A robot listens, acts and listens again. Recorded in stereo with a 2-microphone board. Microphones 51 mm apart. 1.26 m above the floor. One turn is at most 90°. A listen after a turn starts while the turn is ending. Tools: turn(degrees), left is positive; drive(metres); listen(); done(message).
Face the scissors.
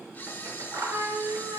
turn(degrees=-60)
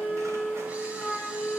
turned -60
listen()
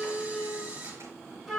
listen()
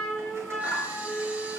done("I heard scissors, but can't make it out now. It was about straight ahead or 60° right.")